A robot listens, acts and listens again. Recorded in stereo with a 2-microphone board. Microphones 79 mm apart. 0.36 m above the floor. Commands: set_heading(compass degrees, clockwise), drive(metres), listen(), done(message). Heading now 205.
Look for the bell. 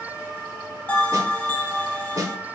set_heading(185)
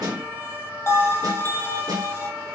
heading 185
set_heading(50)
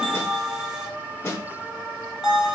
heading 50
set_heading(60)
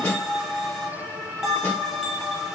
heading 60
done("Facing the bell.")